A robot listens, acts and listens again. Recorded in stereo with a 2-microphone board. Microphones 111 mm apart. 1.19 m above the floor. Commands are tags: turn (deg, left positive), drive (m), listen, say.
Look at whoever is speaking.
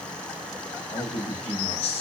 <turn deg="75"/>
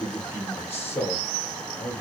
<turn deg="30"/>
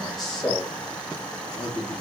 <turn deg="10"/>
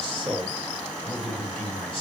<say>Found it: a man speaking, straight ahead.</say>